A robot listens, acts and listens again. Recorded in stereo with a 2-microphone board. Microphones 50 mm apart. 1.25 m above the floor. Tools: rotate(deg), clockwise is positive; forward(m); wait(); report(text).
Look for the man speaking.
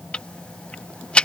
wait()
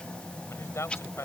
rotate(-65)
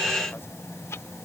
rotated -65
wait()
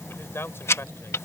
rotate(-55)
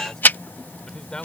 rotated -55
rotate(-15)
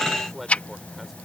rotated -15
report("Found it: a man speaking, straight ahead.")